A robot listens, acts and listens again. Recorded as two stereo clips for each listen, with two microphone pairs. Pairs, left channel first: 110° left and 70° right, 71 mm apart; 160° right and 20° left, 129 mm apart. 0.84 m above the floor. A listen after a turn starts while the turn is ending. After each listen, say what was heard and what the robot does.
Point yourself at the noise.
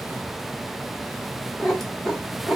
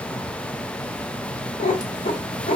The cat meowing: 165° right. Turn 165° right.
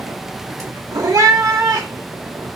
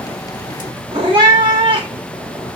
The cat meowing is now 30° right. Turn 30° right.
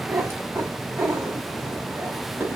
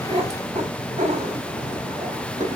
The cat meowing is now 10° right. Turn 10° right.
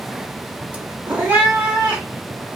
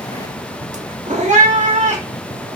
Found it: a cat meowing, straight ahead, under 1 m away.